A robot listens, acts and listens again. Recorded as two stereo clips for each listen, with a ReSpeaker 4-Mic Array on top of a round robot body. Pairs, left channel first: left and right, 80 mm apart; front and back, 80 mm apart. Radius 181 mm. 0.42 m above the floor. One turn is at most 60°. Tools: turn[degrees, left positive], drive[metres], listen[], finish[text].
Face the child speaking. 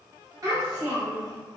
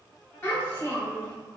Thought: The child speaking: 35° right.
Action: turn[-35]
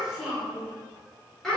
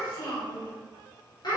Thought: The child speaking is now 10° left.
Action: turn[10]
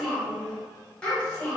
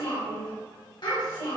Thought: The child speaking is now 15° left.
Action: turn[15]
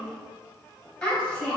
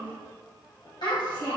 Thought: The child speaking is now 15° left.
Action: turn[15]
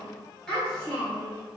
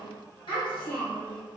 Thought: The child speaking is now 10° left.
Action: turn[10]
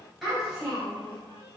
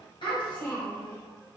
Action: finish[Found it: a child speaking, straight ahead.]